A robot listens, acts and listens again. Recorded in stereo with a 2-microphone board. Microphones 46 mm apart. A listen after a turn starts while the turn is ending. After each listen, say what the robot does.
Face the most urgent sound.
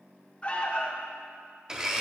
Turn 30° left.
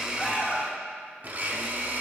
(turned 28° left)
Facing the alarm, under 1 m away.